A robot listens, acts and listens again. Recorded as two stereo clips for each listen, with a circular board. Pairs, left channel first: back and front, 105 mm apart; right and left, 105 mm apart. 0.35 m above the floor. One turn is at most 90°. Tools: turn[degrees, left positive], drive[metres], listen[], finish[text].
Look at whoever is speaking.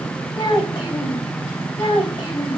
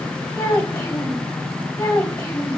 Thought: The child speaking: 145° right.
Action: turn[-90]
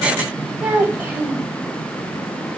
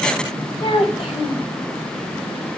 Thought: The child speaking is now 75° right.
Action: turn[-75]
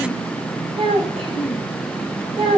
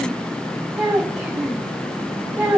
Thought: The child speaking is now 10° left.
Action: turn[10]
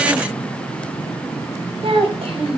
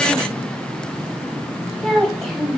Action: finish[Found it: a child speaking, straight ahead, 1 to 2 m away.]